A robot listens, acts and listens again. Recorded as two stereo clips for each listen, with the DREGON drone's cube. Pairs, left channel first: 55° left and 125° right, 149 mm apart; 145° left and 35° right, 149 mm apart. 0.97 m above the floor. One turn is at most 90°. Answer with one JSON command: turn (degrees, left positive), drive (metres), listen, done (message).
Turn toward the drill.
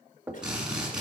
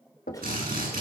{"turn": -40}
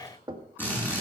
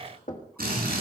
{"turn": -20}
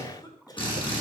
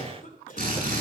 {"done": "Facing the drill."}